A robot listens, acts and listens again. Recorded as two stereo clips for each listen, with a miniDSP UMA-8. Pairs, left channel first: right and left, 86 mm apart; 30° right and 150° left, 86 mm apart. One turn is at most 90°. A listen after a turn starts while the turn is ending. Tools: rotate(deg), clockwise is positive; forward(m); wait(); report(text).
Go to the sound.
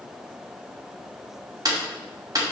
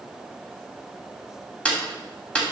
rotate(-45)
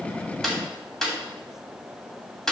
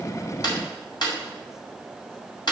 forward(1.0)
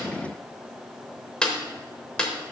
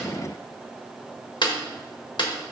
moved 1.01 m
rotate(10)
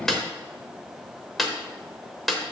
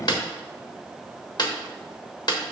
forward(1.0)
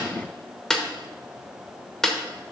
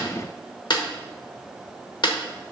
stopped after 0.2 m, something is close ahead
report("Arrived at the snare drum, straight ahead.")